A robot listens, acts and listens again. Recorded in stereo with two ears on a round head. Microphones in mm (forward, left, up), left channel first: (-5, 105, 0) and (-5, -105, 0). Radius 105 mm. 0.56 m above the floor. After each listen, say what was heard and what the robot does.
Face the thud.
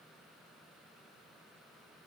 Keep listening.
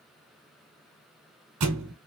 Turn 90° right.
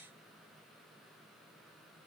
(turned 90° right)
Facing where the thud came from. I can't hear it now.